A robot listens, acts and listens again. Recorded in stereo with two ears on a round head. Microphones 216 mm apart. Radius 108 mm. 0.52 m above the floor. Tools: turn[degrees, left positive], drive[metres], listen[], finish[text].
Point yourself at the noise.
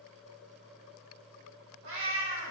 Action: turn[-90]
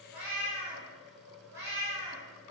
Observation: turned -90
Thought: So it is at 15° right.
Action: turn[-15]
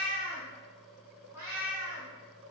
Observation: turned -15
Thought: The cat meowing is now 15° right.
Action: turn[-15]
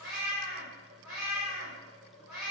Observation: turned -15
Action: finish[Found it: a cat meowing, straight ahead.]